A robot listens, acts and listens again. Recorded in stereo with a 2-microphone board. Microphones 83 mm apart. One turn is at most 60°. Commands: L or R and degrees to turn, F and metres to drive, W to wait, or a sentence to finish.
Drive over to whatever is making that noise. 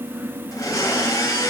L45
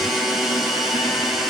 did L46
F1.0
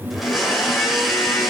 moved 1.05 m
F1.0
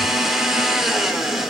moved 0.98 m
F1.0
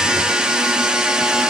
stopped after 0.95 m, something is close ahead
R10
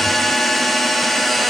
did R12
Arrived at the blender, straight ahead.